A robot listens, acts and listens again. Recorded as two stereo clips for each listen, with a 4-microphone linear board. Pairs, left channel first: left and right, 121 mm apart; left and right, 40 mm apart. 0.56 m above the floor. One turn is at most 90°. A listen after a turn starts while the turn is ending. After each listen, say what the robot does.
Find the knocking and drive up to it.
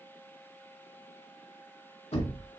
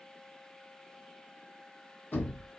Turn 60° left.
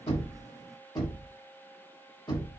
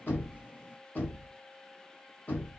Turn 45° left.
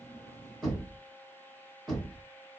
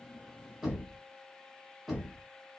Drive 1.0 m forward.
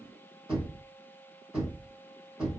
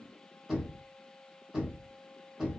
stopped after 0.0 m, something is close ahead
Turn 10° right.
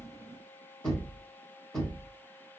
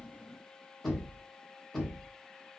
Blocked. The knocking is further on, straight ahead.